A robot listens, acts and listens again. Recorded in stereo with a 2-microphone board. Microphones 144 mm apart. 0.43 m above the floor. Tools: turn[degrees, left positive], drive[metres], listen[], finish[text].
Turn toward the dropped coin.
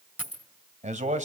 Action: turn[-30]
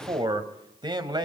Action: listen[]
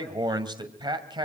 Action: finish[I heard a dropped coin, but can't make it out now. It was about 20° left or 140° right.]